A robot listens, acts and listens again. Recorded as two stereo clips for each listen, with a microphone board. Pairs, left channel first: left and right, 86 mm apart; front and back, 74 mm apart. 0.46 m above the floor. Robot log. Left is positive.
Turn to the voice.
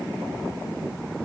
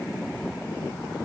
cmd idle
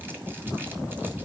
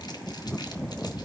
cmd idle
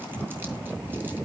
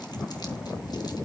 end: I can't make out anyone speaking.